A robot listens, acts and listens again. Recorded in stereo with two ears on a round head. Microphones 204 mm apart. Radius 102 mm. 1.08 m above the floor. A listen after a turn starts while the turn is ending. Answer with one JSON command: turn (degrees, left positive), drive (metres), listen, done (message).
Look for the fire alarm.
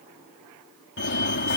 {"turn": 50}
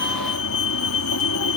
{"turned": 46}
{"turn": 80}
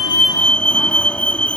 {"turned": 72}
{"done": "Found it: a fire alarm, straight ahead."}